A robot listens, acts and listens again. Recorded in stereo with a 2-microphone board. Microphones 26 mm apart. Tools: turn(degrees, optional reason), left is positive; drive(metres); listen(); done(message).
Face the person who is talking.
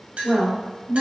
turn(degrees=-65, reason="The woman speaking: about 65° right or 115° right.")
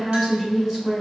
turn(degrees=-10, reason="So it is at 10° right.")
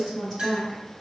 done("Facing the woman speaking, 1 to 2 m away.")